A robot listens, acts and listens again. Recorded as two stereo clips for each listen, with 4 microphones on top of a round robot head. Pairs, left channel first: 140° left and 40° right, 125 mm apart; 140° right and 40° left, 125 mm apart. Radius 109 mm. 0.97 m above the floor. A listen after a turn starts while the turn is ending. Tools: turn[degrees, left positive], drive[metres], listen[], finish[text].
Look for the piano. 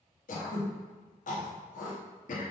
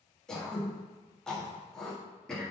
Action: listen[]
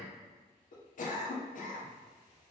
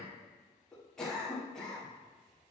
Action: listen[]
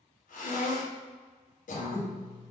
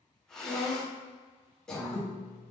Thought: The piano: 15° right.
Action: turn[-15]
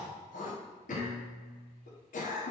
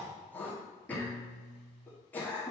Thought: The piano is now 10° right.
Action: turn[-10]
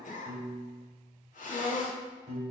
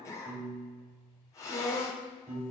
Action: finish[Found it: a piano, straight ahead, 1 to 2 m away.]